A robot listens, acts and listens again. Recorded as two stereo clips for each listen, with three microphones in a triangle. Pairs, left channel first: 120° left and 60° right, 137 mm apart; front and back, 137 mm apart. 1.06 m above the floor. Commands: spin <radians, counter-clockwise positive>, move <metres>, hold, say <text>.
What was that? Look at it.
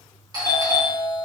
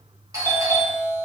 spin -2.01
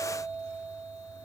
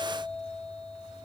spin -0.87
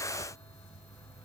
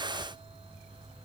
hold
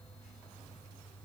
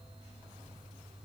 hold
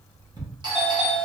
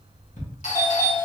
spin -0.17
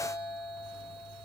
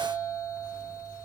say Facing the doorbell.